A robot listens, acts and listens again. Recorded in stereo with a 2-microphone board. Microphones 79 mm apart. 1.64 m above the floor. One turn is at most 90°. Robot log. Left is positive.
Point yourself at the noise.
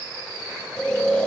cmd yaw +30
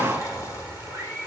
cmd idle
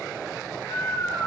note: So it is at 140° left.
cmd yaw +90
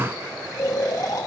note: The snoring is now 50° left.
cmd yaw +50
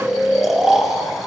end: Found it: snoring, straight ahead, 2 to 4 m away.